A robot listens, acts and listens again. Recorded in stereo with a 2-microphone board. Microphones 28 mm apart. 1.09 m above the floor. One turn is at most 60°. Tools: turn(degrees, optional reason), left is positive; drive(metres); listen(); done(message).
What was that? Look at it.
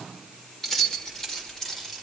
turn(degrees=15, reason="The keys jangling: about 15° left or 165° left.")
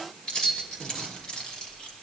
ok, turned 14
turn(degrees=35, reason="The keys jangling: about 35° left or 145° left.")
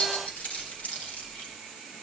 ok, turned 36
turn(degrees=60, reason="So it is at 110° left.")
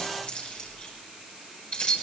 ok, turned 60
turn(degrees=45, reason="The keys jangling is now 45° left.")
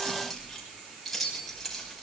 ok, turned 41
done("Facing the keys jangling, over 4 m away.")